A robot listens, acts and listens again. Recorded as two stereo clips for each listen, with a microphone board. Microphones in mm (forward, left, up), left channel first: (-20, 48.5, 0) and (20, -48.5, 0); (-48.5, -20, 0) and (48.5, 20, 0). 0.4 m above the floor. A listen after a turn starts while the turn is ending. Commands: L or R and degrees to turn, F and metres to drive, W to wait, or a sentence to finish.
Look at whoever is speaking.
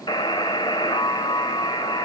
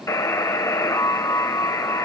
W
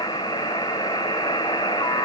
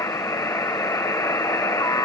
W
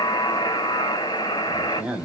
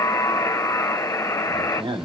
Found it: a man speaking, straight ahead.